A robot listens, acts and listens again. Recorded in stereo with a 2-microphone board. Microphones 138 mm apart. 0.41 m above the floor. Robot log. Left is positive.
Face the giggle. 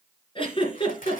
note: The giggle: about 40° left or 140° left.
cmd yaw +40
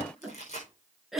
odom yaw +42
end: Facing the giggle.